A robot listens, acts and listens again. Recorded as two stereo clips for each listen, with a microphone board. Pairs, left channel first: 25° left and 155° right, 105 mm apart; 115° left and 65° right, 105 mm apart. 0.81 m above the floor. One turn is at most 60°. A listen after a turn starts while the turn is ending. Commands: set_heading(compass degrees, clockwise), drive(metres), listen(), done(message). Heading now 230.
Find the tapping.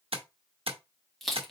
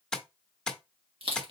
set_heading(290)
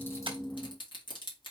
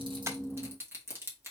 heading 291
set_heading(351)
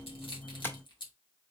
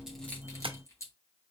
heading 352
set_heading(37)
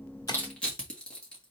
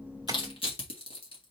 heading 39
listen()
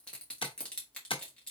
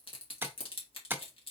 done("Found it: tapping, straight ahead, under 1 m away.")